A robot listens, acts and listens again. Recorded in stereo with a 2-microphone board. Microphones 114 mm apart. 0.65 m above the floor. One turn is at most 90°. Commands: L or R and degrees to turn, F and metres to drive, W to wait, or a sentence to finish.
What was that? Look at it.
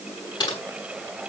L40
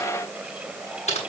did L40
L90
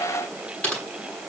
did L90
L10
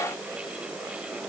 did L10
W
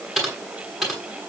Facing the typing on a keyboard, over 4 m away.